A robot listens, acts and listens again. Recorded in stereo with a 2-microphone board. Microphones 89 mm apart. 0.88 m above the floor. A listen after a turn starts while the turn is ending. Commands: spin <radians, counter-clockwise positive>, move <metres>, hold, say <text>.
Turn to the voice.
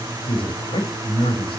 spin 1.57
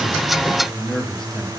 say Facing the man speaking.